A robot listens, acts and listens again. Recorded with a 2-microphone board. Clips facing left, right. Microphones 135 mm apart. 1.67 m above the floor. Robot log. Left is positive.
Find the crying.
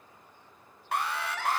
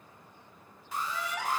cmd yaw -30
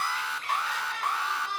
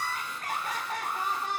note: So it is at 140° right.
cmd yaw -140
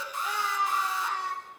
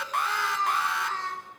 note: The crying is now 10° left.
cmd yaw +10
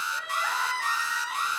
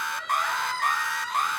end: Facing the crying, over 4 m away.